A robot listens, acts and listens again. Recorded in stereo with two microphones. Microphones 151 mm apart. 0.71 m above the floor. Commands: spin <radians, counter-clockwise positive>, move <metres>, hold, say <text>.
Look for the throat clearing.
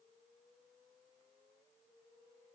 hold
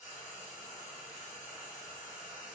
hold
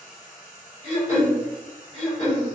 spin 0.79
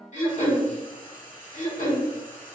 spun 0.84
spin 1.31
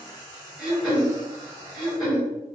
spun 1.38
say Facing the throat clearing, 1 to 2 m away.